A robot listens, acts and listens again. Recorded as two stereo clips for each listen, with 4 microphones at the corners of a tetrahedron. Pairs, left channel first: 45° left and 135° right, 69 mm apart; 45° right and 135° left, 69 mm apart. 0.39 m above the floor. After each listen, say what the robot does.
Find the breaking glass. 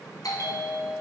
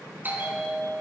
Keep listening.
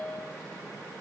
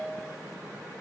Keep listening.
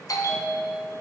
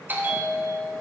I can't make out breaking glass to turn to.